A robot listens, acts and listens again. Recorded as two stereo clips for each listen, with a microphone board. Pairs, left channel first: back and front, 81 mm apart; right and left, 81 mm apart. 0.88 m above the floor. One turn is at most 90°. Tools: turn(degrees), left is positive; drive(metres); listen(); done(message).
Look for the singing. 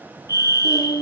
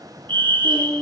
turn(degrees=90)
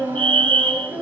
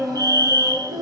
turn(degrees=70)
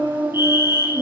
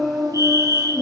turn(degrees=10)
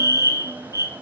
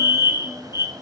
listen()
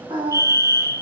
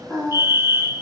done("Facing the singing.")